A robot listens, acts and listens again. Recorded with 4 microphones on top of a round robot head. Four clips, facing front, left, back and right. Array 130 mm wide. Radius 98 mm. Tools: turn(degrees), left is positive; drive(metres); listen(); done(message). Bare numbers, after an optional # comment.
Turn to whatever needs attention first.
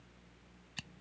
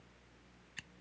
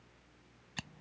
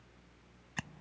listen()
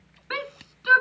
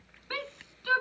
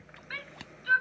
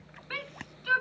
# The shout: 15° left.
turn(15)
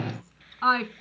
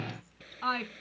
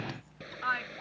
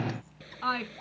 done("Found it: a shout, straight ahead.")